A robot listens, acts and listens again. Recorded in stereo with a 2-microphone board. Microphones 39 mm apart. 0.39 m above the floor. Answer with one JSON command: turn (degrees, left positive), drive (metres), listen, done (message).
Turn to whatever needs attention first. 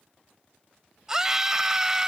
{"turn": -15}
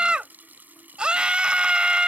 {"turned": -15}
{"turn": -155}
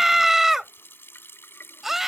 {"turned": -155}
{"turn": -10}
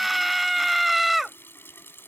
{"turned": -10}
{"done": "Facing the scream."}